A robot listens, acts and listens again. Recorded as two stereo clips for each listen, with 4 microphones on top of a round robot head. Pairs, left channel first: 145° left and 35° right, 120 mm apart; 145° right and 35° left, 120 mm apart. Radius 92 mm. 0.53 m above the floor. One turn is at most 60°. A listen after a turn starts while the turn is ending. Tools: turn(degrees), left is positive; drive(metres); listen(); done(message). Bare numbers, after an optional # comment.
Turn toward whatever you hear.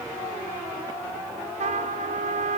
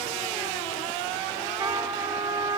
# The trumpet: 25° right.
turn(-25)
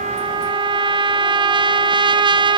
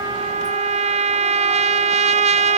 # The trumpet is now 10° left.
turn(10)
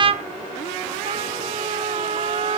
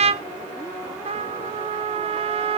done("Facing the trumpet, under 1 m away.")